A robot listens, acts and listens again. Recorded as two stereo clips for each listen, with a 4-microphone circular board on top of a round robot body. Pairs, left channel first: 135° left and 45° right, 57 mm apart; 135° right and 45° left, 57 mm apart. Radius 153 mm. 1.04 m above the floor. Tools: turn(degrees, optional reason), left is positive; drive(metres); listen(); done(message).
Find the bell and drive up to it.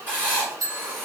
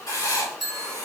turn(degrees=-45, reason="The bell: 45° right.")
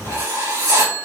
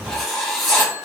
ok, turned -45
turn(degrees=10, reason="The bell is now 10° left.")
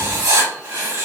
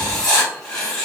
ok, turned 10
listen()
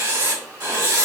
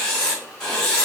listen()
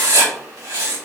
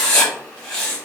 done("Facing where the bell came from. I can't hear it now. I did not reach it.")